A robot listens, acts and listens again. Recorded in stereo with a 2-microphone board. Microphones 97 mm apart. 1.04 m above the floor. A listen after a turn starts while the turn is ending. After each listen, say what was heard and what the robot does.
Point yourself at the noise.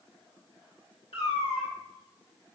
Turn 90° left.
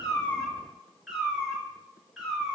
Facing the cat meowing.